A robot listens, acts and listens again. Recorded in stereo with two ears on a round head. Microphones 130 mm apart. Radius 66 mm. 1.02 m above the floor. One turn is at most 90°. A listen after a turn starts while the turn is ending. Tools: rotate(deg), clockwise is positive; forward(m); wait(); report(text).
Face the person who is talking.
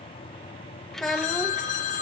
rotate(-30)
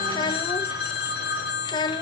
rotate(-90)
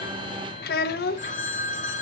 rotate(-90)
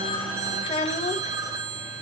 rotate(-35)
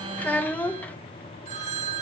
rotate(-10)
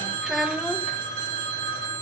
report("Found it: a child speaking, straight ahead.")